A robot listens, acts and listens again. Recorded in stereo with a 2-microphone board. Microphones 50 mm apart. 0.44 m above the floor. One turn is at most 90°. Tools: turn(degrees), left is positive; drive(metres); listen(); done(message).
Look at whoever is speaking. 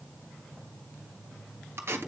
listen()
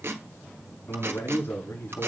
turn(degrees=60)
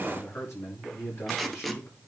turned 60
turn(degrees=65)
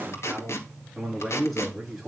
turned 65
done("Found it: a man speaking, straight ahead.")